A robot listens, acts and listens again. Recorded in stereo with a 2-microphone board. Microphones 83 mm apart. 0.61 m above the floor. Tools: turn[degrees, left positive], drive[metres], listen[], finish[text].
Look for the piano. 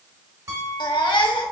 Thought: The piano: about 40° right or 140° right.
Action: turn[-40]
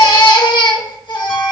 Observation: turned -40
Action: listen[]
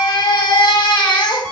Action: listen[]
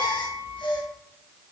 Thought: So it is at 95° right.
Action: turn[-95]
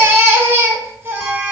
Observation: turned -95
Action: listen[]
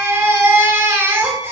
Action: listen[]
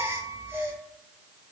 Action: finish[Found it: a piano, straight ahead, 1 to 2 m away.]